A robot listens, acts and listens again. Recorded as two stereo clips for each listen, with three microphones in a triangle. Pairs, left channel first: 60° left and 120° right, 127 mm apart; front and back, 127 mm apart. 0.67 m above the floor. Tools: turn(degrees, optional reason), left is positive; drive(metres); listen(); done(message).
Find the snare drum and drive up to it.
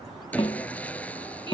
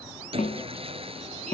turn(degrees=15, reason="The snare drum: 15° left.")
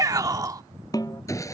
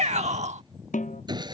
drive(metres=1.0)
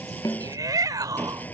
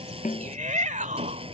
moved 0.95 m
drive(metres=1.0)
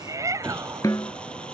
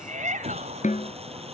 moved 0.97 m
drive(metres=1.0)
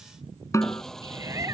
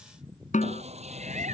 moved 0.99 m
drive(metres=1.0)
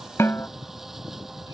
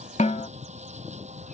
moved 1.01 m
turn(degrees=-10, reason="The snare drum is now 10° right.")
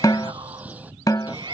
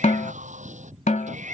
drive(metres=1.0)
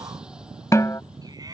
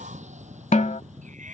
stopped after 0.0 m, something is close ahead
done("Arrived at the snare drum, straight ahead.")